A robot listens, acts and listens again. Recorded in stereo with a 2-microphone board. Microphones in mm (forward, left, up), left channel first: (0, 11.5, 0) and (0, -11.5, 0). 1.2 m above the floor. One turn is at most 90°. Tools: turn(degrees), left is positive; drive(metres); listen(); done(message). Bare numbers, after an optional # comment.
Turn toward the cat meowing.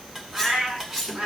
turn(-90)
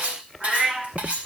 # So it is at 15° right.
turn(-15)
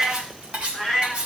done("Found it: a cat meowing, straight ahead, over 4 m away.")